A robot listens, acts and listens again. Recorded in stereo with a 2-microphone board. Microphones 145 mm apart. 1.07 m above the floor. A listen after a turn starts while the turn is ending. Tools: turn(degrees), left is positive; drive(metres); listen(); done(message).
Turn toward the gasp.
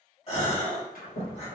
turn(degrees=45)
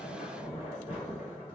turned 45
listen()
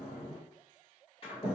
done("I heard a gasp, but can't make it out now. It was about straight ahead or 90° left.")